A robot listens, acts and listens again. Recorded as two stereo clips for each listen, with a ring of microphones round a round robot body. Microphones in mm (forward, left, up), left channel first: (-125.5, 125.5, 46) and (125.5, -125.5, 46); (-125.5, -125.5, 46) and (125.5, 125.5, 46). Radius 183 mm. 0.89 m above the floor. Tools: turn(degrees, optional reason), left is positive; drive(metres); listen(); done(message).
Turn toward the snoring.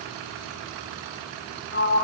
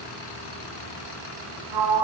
listen()
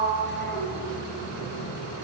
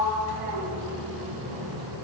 listen()
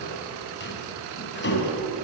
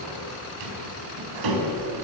done("I can't make out snoring to turn to.")